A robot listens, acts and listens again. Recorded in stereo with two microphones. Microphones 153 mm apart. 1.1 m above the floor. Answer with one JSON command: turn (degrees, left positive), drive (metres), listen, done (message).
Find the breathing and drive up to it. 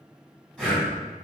{"turn": 30}
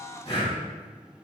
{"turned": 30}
{"turn": 145}
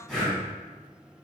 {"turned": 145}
{"drive": 1.0}
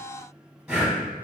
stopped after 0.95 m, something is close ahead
{"done": "I am next to the breathing."}